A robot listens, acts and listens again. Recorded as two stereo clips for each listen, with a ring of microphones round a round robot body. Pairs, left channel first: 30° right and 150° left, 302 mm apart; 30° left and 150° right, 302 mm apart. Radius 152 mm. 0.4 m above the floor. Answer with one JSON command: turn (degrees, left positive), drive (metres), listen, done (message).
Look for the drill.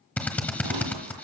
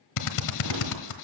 {"turn": 55}
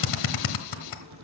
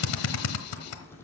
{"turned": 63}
{"turn": -10}
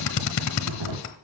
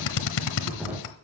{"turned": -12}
{"done": "Facing the drill, 1 to 2 m away."}